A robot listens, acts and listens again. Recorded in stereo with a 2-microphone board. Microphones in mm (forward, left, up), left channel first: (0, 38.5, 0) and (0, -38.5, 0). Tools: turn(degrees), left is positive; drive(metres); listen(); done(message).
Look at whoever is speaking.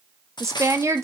turn(degrees=-40)
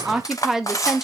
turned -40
done("Facing the woman speaking, 1 to 2 m away.")